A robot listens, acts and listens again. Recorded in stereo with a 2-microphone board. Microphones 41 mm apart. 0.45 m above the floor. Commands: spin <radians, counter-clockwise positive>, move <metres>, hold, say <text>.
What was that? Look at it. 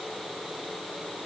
hold
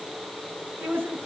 spin -1.13
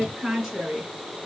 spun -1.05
spin -0.26
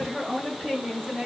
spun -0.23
say Found it: a woman speaking, straight ahead, over 4 m away.